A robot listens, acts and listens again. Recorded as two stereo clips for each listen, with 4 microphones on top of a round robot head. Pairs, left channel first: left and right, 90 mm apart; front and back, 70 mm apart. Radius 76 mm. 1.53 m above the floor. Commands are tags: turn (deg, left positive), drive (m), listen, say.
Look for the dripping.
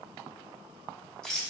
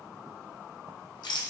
<listen/>
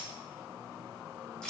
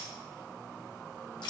<listen/>
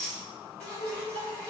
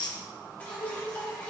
<turn deg="65"/>
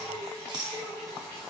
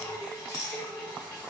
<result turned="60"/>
<say>Found it: dripping, straight ahead, 1 to 2 m away.</say>